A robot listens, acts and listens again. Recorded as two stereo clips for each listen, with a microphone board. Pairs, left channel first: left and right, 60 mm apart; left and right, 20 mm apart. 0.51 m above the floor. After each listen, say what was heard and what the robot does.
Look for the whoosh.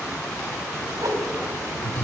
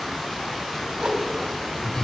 The whoosh: about 70° right or 110° right. Turn 70° right.
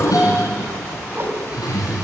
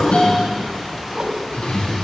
So it is at 40° right. Turn 40° right.
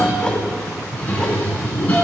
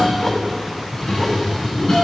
Keep listening.
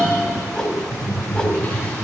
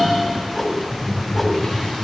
The whoosh is now 10° left. Turn 10° left.
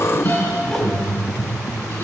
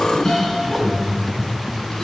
Keep listening.
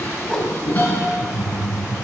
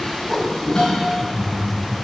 Found it: a whoosh, straight ahead.